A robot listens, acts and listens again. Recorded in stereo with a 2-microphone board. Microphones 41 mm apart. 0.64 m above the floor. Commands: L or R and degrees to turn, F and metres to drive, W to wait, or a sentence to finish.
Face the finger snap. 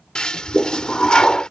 W
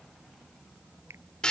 R90
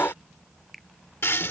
Found it: a finger snap, straight ahead.